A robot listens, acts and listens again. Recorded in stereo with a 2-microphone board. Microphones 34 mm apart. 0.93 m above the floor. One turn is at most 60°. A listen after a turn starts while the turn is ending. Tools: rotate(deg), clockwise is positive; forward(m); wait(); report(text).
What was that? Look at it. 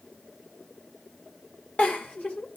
rotate(-45)
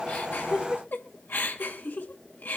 rotate(-60)
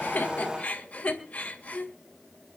rotate(-40)
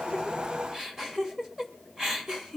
rotate(15)
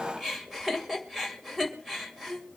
rotate(10)
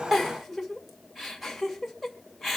report("Found it: a giggle, straight ahead, 2 to 4 m away.")